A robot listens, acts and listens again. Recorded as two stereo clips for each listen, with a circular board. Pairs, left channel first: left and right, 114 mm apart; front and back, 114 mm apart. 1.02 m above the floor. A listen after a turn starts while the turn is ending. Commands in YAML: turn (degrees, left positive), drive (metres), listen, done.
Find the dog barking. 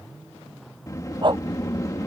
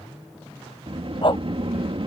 turn: -45
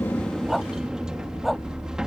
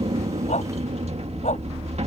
listen: true
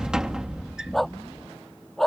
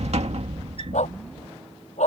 done: "Facing the dog barking."